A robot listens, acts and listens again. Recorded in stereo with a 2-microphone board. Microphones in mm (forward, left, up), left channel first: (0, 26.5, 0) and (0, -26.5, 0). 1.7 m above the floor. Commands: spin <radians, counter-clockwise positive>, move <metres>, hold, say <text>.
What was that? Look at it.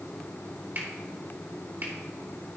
spin -0.79
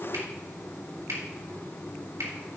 spin -1.57
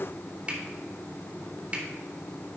spin -0.44
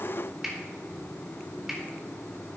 say Found it: a finger snap, straight ahead, 2 to 4 m away.